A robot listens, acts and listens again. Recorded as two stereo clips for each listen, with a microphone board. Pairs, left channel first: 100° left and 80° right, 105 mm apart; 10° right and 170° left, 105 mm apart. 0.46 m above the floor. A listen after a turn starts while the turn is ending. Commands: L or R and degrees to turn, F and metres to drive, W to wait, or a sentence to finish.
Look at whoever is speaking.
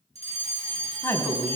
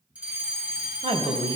L165
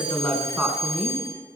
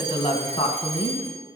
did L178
Found it: a woman speaking, straight ahead, 2 to 4 m away.